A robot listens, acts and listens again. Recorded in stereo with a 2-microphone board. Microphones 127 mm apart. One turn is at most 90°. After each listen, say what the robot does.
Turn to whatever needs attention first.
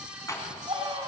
Turn 35° right.
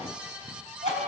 Turn 90° right.
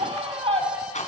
Turn 45° right.
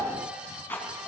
Keep listening.
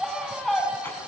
Facing the scream, over 4 m away.